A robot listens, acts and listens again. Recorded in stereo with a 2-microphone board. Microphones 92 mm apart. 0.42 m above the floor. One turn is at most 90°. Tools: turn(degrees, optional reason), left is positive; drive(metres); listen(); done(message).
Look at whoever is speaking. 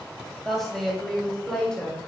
turn(degrees=30)
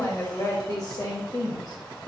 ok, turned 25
turn(degrees=90, reason="So it is at 130° left.")
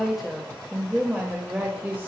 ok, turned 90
turn(degrees=-25, reason="The woman speaking is now 25° right.")
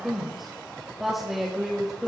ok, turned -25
done("Facing the woman speaking, 1 to 2 m away.")